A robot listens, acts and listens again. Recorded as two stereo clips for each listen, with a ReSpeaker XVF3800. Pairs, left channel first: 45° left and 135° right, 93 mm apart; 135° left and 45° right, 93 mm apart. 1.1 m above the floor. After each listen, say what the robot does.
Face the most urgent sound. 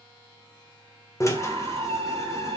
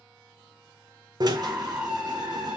Turn 115° right.
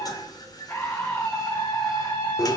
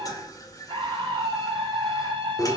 Turn 20° right.
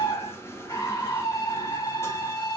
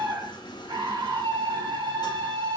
Found it: a scream, straight ahead, 1 to 2 m away.